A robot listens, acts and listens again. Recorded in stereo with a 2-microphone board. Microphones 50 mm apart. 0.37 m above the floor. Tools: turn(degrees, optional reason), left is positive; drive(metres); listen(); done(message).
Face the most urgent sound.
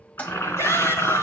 turn(degrees=70, reason="The shout: about 70° left or 110° left.")
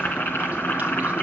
listen()
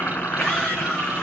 turn(degrees=10, reason="So it is at 10° left.")
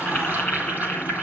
listen()
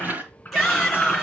done("Found it: a shout, straight ahead, over 4 m away.")